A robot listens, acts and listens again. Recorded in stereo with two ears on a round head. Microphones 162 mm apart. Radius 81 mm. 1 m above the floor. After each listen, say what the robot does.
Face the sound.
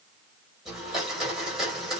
Turn 30° right.
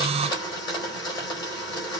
Turn 25° left.
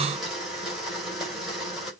Found it: a blender, straight ahead, over 4 m away.